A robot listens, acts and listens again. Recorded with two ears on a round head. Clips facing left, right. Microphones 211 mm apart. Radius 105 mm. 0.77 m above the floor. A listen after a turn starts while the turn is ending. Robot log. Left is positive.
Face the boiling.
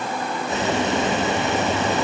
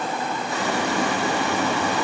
note: The boiling: about 20° left or 160° left.
cmd yaw +20
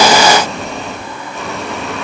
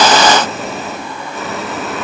end: Facing the boiling.